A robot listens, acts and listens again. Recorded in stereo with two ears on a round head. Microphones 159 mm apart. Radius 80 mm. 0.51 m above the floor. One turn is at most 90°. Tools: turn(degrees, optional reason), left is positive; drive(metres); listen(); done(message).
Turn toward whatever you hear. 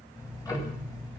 turn(degrees=20, reason="The ticking: about 20° left or 160° left.")
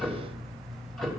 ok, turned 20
done("Facing the ticking, 2 to 4 m away.")